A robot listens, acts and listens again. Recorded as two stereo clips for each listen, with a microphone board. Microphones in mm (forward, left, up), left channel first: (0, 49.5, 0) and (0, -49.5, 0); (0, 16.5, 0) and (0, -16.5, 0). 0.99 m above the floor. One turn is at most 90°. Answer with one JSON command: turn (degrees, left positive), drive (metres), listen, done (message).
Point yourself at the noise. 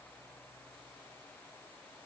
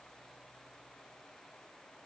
{"listen": true}
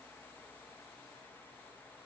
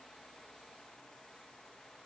{"listen": true}
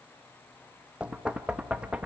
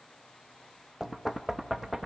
{"turn": -30}
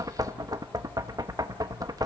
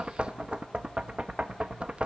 {"turn": -90}
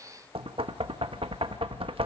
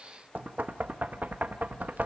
{"turn": -75}
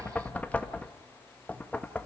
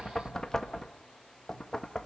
{"turn": 15}
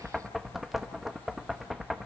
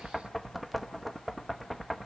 {"done": "Found it: knocking, straight ahead, 1 to 2 m away."}